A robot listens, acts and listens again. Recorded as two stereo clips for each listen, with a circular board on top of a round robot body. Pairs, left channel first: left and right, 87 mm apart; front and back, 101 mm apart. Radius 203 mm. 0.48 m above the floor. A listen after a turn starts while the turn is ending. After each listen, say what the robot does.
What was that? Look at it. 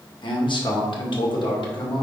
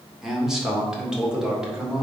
Turn 95° left.
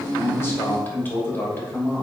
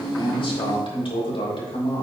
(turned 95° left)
Turn 25° left.
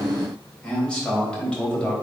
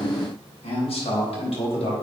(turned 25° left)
Turn 10° left.
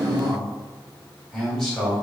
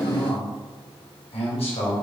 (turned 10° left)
Facing the man speaking, over 4 m away.